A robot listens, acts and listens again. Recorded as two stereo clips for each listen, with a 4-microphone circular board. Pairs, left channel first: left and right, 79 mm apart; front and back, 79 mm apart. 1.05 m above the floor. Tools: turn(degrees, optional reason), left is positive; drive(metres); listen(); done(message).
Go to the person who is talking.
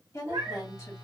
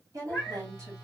turn(degrees=140, reason="The woman speaking: 140° left.")
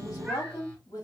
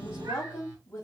turn(degrees=50, reason="The woman speaking is now 50° left.")
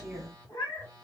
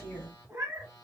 listen()
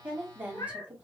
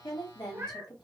turn(degrees=-15, reason="The woman speaking is now 15° right.")
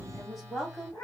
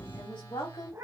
drive(metres=1.0)
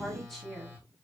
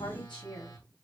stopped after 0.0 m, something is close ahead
done("Something is in my way. I am facing the woman speaking but have not reached it.")